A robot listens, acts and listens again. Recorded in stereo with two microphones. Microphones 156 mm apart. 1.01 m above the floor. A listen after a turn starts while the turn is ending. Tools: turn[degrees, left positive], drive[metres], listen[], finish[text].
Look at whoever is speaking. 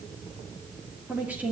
Action: turn[-30]
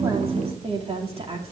Thought: So it is at 140° right.
Action: turn[-140]
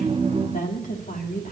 Thought: The woman speaking is now 55° left.
Action: turn[55]
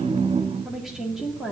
Action: finish[Found it: a woman speaking, straight ahead.]